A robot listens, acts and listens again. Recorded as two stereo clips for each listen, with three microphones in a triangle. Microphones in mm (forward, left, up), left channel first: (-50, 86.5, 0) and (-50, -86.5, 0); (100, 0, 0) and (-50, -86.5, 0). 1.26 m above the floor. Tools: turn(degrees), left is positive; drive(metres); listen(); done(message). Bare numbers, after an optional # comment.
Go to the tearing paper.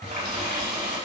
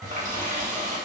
listen()
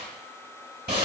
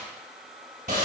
listen()
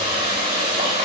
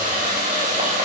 done("I can't make out tearing paper to turn to.")